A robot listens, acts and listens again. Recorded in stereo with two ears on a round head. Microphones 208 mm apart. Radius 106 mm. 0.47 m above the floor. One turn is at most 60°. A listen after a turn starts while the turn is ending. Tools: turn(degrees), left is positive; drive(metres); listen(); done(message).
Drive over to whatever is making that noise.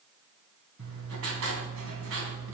turn(degrees=-60)
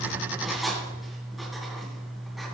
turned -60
drive(metres=1.0)
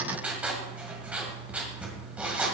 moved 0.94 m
drive(metres=1.0)
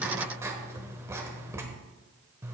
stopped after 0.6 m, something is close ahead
turn(degrees=-10)
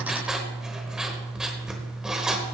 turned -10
done("I am next to the writing.")